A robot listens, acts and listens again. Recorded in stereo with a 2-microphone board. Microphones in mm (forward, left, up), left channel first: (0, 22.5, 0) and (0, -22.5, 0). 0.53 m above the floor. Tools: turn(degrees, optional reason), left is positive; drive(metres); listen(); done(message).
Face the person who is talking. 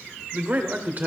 turn(degrees=-35, reason="The man speaking: about 35° right or 145° right.")
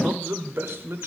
turn(degrees=-105, reason="So it is at 105° right.")
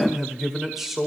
done("Found it: a man speaking, straight ahead, 1 to 2 m away.")